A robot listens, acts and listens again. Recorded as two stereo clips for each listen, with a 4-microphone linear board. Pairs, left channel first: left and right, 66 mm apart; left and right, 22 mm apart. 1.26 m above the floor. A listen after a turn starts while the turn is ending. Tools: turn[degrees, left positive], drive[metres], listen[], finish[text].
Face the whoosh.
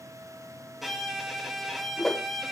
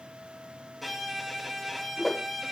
Action: turn[30]
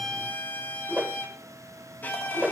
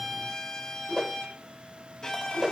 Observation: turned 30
Thought: So it is at 30° right.
Action: turn[-30]
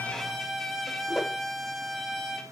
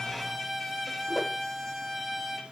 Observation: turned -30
Action: finish[Found it: a whoosh, straight ahead.]